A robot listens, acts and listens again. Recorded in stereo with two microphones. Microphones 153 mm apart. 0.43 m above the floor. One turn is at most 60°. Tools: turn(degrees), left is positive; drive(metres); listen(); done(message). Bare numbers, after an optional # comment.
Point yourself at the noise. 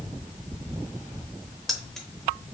turn(30)
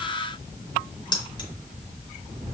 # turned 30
# So it is at 145° left.
turn(60)
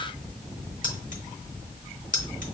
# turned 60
# The keys jangling is now 90° left.
turn(60)
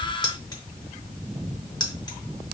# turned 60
# The keys jangling is now 30° left.
turn(30)
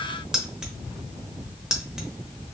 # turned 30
done("Facing the keys jangling.")